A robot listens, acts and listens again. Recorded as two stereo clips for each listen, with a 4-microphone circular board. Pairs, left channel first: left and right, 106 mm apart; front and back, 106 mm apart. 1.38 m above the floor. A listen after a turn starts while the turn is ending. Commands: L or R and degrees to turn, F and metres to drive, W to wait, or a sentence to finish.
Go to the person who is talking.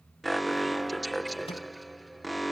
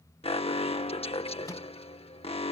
W
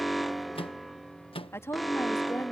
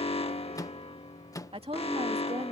L155
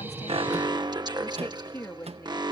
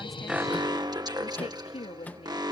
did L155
L20
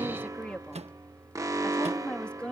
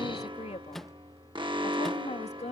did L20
L10
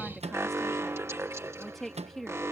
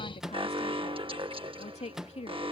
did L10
F1.0
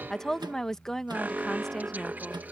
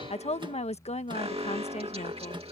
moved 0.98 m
F1.0
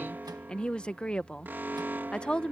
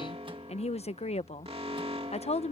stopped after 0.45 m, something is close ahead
L10
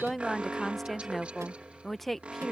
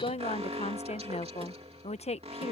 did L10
I am next to the woman speaking.